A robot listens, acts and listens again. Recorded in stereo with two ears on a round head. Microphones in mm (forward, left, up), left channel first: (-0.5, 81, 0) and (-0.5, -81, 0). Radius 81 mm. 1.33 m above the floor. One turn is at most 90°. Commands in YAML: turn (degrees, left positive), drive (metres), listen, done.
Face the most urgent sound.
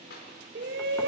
turn: -60
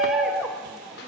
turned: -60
done: "Found it: a shout, straight ahead."